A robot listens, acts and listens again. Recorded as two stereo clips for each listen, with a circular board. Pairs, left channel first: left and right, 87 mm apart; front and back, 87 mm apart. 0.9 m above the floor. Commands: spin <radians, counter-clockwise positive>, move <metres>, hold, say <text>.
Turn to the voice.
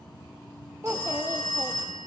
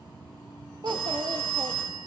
spin -2.53
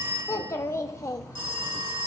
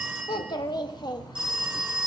spin 0.61
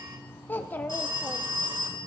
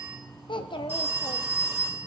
spin 0.35
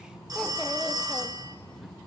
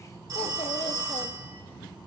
hold
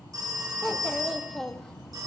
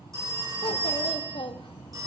say Found it: a child speaking, straight ahead.